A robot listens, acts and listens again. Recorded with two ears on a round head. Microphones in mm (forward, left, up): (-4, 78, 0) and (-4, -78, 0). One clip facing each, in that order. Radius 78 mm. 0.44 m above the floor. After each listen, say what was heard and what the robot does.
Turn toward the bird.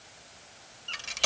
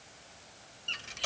The bird: about 25° right or 155° right. Turn 25° right.
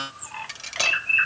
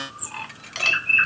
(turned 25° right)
So it is at 125° right. Turn 125° right.
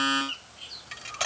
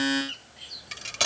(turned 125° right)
The bird is now 15° right. Turn 15° right.
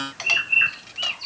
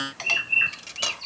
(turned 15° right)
Facing the bird.